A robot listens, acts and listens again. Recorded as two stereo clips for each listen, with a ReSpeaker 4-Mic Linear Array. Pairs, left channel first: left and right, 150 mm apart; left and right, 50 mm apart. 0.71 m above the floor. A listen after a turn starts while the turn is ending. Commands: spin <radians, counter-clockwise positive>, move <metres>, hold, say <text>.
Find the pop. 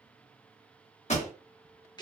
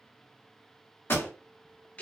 spin 0.87
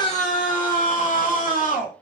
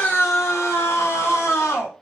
hold
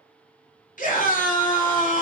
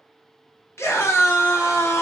say I heard a pop, but can't make it out now. It was about straight ahead or 80° left.